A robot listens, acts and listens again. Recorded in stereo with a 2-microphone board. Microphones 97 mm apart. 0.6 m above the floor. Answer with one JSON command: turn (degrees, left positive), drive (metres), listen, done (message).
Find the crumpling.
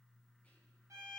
{"listen": true}
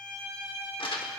{"turn": 60}
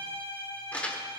{"turn": 15}
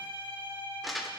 {"done": "Found it: crumpling, straight ahead."}